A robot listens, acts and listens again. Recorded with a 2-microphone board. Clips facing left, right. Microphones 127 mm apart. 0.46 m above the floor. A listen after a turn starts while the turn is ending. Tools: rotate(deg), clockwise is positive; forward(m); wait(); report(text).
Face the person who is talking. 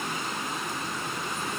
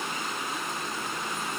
wait()
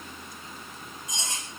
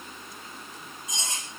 wait()
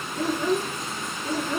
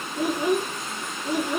rotate(30)
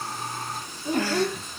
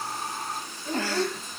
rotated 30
rotate(-15)
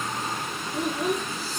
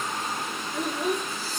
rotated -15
report("Found it: a child speaking, straight ahead.")